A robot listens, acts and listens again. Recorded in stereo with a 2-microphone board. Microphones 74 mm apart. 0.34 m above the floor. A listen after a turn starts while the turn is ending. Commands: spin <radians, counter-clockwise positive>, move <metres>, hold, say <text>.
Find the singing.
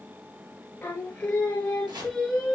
spin 0.52
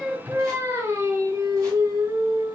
spin -1.05
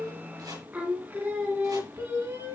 spin -0.79
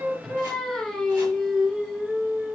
say Found it: singing, straight ahead, 1 to 2 m away.